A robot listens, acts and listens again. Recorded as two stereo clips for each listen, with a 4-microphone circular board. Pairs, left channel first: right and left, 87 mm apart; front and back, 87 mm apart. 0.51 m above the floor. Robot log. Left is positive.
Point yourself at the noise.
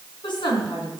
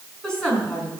note: The woman speaking: 80° right.
cmd yaw -80
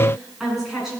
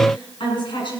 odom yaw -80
end: Found it: a woman speaking, straight ahead.